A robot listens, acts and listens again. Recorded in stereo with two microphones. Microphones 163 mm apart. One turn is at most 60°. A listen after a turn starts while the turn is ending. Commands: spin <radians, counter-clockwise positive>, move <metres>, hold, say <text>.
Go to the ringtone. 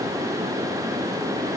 hold
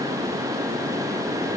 hold
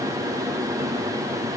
say I can't make out a ringtone.